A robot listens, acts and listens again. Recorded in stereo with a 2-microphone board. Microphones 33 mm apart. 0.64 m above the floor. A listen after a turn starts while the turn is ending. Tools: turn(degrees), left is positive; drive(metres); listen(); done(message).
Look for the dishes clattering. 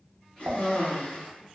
turn(degrees=-70)
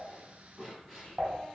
turn(degrees=-30)
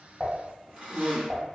done("Facing the dishes clattering.")